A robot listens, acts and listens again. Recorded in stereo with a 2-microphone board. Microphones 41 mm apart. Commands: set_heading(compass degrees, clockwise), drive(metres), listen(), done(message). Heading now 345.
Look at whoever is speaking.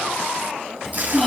set_heading(315)
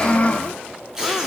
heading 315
set_heading(170)
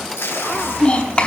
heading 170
set_heading(145)
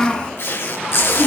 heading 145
set_heading(125)
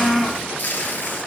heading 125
done("Found it: a child speaking, straight ahead.")